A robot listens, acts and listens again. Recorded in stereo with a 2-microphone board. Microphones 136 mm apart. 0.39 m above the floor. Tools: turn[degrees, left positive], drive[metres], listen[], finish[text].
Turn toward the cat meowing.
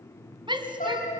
Action: turn[90]
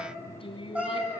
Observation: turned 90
Thought: So it is at 10° right.
Action: turn[-10]
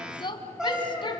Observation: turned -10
Action: finish[Found it: a cat meowing, straight ahead.]